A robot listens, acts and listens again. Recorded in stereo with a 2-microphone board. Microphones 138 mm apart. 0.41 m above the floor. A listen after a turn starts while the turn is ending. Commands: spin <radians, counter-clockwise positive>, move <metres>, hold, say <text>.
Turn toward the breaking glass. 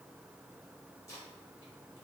hold
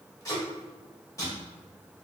hold
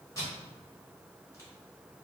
say I can't make out breaking glass to turn to.